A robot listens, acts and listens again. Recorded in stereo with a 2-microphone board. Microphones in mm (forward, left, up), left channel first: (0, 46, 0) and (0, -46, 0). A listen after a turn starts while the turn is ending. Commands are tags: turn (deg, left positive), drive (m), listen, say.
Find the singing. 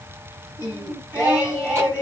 <turn deg="-20"/>
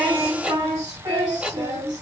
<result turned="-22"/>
<turn deg="-135"/>
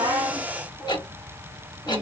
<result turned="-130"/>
<listen/>
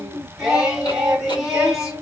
<say>Found it: singing, straight ahead.</say>